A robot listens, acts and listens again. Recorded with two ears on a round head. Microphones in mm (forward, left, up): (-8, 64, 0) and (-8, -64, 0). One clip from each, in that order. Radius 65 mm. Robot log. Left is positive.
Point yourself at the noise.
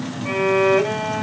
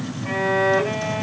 note: The violin: about 40° left or 140° left.
cmd yaw +40
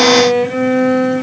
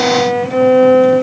note: So it is at 95° left.
cmd yaw +95
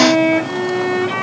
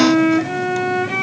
note: The violin is now 30° left.
cmd yaw +30
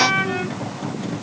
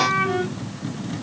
end: Found it: a violin, straight ahead.